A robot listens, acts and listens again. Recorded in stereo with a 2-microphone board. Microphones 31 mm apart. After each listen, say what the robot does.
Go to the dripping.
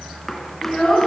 Keep listening.
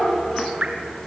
Turn 40° right.
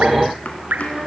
Turn 100° right.
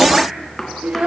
Keep listening.
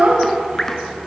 Turn 15° left.
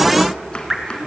Drive 1.0 m forward.
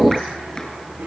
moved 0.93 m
Keep listening.
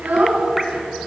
Keep listening.
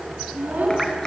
I heard dripping from this way, but can't make it out now. I did not reach it.